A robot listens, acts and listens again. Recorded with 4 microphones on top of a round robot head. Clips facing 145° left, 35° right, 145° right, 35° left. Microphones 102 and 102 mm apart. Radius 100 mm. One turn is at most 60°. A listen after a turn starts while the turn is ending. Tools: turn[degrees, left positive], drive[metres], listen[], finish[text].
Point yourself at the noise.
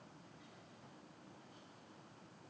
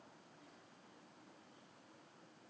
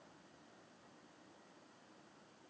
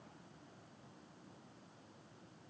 Action: listen[]
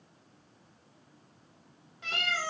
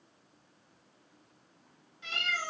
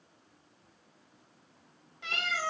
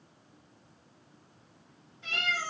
Thought: The cat meowing: 165° right.
Action: turn[-60]
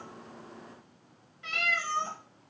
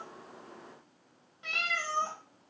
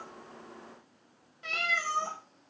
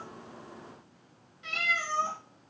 Thought: The cat meowing is now 105° right.
Action: turn[-60]
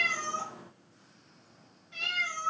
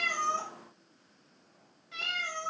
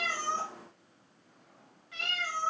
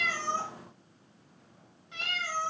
Thought: The cat meowing is now 35° right.
Action: turn[-35]
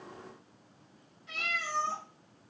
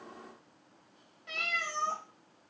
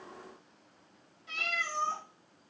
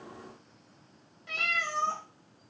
Action: finish[Found it: a cat meowing, straight ahead, 1 to 2 m away.]